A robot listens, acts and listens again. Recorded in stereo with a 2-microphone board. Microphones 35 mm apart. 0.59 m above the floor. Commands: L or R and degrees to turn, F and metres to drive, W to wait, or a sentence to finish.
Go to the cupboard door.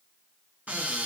R50
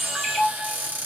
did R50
R80
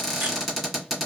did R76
F1.0
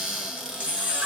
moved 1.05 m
R10
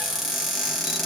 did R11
F1.0
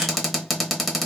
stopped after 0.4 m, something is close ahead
I am next to the cupboard door.